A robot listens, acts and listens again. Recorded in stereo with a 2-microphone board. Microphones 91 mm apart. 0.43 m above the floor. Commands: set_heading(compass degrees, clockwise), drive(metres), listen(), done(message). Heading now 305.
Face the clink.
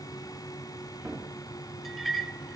set_heading(275)
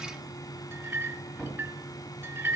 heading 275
set_heading(305)
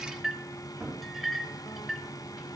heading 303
done("Facing the clink.")